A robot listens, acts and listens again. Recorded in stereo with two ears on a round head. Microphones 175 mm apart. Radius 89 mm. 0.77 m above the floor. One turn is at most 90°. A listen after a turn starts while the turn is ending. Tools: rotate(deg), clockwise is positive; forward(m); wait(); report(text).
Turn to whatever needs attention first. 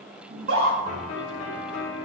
rotate(75)
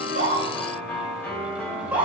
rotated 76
rotate(10)
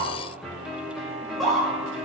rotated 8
report("Facing the scream, 2 to 4 m away.")